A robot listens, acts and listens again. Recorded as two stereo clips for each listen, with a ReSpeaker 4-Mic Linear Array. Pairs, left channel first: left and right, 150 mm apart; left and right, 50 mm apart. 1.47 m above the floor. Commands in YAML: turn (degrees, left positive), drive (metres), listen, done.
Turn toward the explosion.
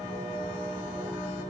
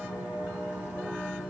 listen: true
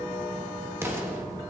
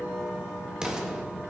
turn: -15
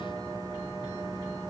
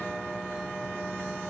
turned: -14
listen: true
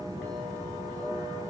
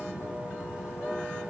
done: "I heard an explosion, but can't make it out now. It was about straight ahead or 150° right."